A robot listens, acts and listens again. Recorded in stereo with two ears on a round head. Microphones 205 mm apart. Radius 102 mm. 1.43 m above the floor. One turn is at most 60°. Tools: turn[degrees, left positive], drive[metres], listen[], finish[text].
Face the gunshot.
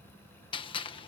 Thought: The gunshot: about 25° left or 155° left.
Action: turn[25]
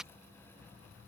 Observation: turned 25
Action: finish[Facing the gunshot.]